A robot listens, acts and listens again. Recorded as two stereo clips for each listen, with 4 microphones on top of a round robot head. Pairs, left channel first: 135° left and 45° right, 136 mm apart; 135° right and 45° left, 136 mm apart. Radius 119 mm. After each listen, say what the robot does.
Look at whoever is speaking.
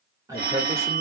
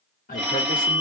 Turn 115° right.
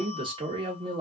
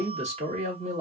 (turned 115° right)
Facing the man speaking, 1 to 2 m away.